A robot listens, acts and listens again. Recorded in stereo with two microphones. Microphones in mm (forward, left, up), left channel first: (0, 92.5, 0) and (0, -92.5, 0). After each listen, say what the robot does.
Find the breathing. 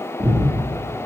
Turn 15° right.
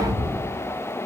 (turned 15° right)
Facing the breathing.